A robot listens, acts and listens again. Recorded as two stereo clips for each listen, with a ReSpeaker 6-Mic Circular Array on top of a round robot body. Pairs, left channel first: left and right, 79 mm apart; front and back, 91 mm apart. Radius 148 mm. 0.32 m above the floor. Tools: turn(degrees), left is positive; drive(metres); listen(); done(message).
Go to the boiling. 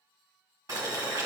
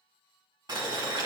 turn(degrees=-135)
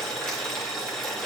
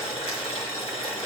drive(metres=1.0)
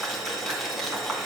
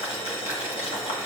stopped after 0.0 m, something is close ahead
done("Something is in my way. I am facing the boiling but have not reached it.")